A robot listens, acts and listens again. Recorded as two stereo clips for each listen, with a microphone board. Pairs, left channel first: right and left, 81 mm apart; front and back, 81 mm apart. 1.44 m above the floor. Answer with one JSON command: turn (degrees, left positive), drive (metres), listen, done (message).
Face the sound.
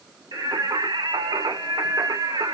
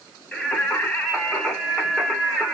{"turn": 95}
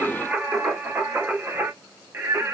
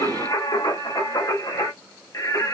{"turn": 35}
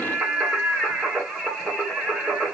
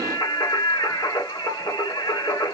{"turn": 10}
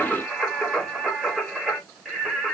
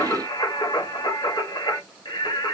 {"done": "Facing the singing, 2 to 4 m away."}